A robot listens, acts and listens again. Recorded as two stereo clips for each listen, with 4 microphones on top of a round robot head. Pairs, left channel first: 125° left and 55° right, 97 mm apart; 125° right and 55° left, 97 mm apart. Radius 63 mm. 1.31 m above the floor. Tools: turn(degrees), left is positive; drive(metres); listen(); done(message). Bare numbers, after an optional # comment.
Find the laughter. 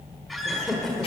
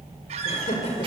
# The laughter: 145° right.
turn(-145)
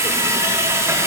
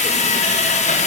listen()
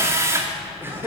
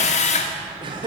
# The laughter is now 15° left.
turn(15)
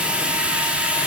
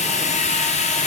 listen()
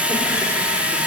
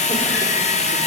listen()
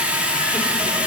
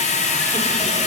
done("I heard laughter from this way, but can't make it out now.")